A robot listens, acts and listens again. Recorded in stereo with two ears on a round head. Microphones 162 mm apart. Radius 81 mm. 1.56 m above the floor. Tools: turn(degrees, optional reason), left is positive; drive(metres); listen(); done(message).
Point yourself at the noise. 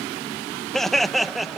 turn(degrees=30)
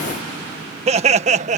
turn(degrees=-40, reason="So it is at 40° right.")
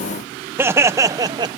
turn(degrees=-25, reason="The laughter is now 25° right.")
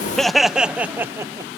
turn(degrees=-15, reason="The laughter is now 15° right.")
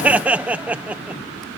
turn(degrees=-10, reason="The laughter is now 10° right.")
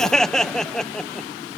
done("Found it: laughter, straight ahead.")